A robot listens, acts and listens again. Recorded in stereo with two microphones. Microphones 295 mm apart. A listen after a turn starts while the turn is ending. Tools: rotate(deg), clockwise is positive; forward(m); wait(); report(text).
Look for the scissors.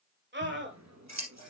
rotate(65)
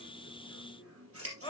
rotate(50)
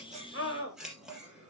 report("Facing the scissors, 2 to 4 m away.")